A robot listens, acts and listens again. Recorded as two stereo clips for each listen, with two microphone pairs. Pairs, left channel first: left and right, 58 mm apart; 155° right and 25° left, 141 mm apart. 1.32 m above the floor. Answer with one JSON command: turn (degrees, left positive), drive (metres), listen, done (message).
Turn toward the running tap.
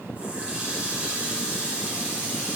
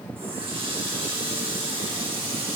{"turn": -20}
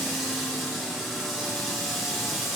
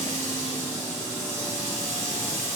{"done": "Facing the running tap, 2 to 4 m away."}